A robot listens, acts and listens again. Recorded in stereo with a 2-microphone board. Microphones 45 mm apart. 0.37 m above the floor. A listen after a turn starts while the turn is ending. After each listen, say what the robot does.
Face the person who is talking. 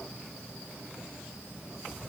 Keep listening.
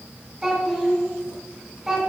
Turn 30° right.
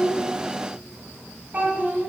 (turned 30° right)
Turn 145° right.
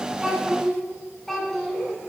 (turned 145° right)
Found it: a child speaking, straight ahead, 2 to 4 m away.